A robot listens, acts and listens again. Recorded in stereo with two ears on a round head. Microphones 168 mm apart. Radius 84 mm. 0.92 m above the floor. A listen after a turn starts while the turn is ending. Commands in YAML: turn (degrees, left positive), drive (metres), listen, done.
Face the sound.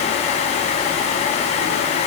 listen: true
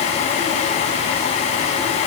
listen: true
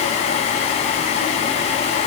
done: "I can't make out anything."